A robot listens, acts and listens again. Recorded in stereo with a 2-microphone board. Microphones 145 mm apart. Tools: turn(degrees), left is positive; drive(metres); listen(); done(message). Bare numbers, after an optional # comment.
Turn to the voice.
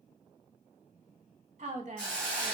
# The woman speaking: about 45° right or 135° right.
turn(-45)
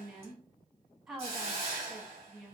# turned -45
done("Found it: a woman speaking, straight ahead, 1 to 2 m away.")